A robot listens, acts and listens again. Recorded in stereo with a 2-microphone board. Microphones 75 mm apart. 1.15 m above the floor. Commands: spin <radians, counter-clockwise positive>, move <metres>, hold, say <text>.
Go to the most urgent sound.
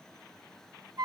hold
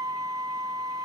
hold
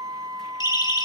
spin 1.22
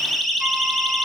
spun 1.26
move 1.0
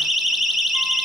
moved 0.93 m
move 1.0
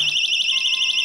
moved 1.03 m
move 1.0
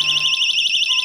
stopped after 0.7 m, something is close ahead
say Arrived at the siren, straight ahead.